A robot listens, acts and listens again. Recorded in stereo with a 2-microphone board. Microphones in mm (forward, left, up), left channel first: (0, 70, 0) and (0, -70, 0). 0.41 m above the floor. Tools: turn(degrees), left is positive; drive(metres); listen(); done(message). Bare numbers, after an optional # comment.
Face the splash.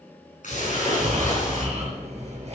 # The splash: about 65° left or 115° left.
turn(65)
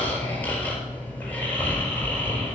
listen()
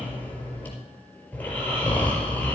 done("I heard a splash, but can't make it out now. It was about straight ahead or 50° left.")